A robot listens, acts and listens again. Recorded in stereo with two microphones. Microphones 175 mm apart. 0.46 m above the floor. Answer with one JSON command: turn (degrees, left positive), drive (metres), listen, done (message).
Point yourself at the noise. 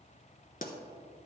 {"turn": 50}
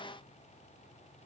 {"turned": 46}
{"listen": true}
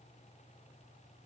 {"done": "I heard a pop, but can't make it out now. It was about 5° left or 80° left."}